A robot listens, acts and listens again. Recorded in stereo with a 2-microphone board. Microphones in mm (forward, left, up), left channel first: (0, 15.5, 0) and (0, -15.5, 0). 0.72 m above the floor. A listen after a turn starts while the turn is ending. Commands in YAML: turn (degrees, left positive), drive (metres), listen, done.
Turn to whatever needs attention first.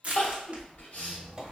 turn: 60
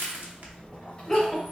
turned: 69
done: "Facing the crying."